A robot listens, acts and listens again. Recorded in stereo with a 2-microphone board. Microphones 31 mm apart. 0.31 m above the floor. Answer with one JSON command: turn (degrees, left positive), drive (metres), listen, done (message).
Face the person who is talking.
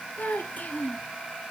{"turn": 70}
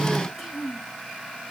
{"done": "Found it: a child speaking, straight ahead."}